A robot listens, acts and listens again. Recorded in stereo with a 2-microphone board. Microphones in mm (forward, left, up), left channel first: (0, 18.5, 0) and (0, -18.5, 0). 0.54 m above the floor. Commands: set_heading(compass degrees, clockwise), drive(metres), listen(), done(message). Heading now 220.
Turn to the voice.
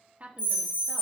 set_heading(265)
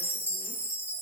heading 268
listen()
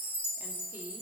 listen()
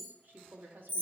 set_heading(348)
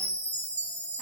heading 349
listen()
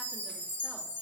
listen()
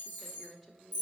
done("Facing the woman speaking, 1 to 2 m away.")